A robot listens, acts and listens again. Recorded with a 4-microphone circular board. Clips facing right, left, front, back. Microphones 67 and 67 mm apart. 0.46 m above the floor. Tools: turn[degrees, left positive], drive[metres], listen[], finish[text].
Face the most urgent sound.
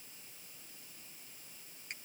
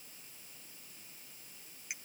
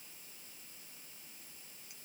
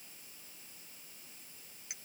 Action: listen[]
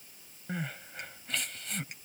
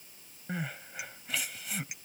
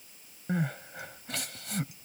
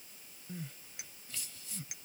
Action: finish[Found it: crying, straight ahead.]